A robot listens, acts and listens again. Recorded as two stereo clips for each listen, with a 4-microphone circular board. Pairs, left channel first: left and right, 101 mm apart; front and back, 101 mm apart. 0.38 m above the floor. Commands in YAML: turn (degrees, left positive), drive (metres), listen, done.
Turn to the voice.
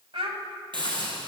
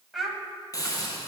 turn: -90
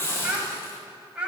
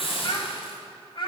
turn: -15
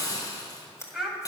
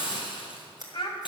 done: "Found it: a child speaking, straight ahead, 1 to 2 m away."